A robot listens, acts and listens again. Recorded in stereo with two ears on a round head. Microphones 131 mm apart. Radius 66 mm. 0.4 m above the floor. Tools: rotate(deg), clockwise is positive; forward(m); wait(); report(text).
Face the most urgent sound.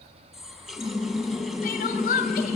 rotate(-60)
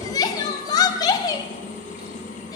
rotate(-30)
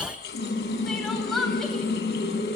report("Found it: crying, straight ahead.")